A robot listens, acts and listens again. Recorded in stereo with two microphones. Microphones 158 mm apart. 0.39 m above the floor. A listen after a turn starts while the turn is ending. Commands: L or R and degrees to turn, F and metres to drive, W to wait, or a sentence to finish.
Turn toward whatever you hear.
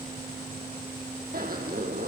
R65
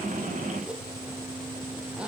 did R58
Facing the zipper.